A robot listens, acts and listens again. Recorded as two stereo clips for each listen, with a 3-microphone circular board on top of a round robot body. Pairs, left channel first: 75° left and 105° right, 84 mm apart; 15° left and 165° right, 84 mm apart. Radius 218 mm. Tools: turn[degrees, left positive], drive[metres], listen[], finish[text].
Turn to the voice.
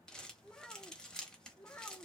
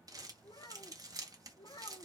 Thought: The child speaking: 20° left.
Action: turn[20]
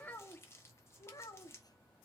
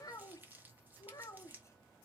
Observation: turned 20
Thought: The child speaking is now 55° left.
Action: turn[55]
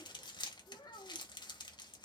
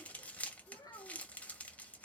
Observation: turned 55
Thought: The child speaking is now 45° left.
Action: turn[45]
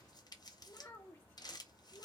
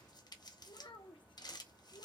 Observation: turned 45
Thought: The child speaking is now 10° left.
Action: turn[10]
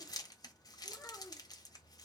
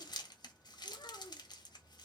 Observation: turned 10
Action: finish[Facing the child speaking, 2 to 4 m away.]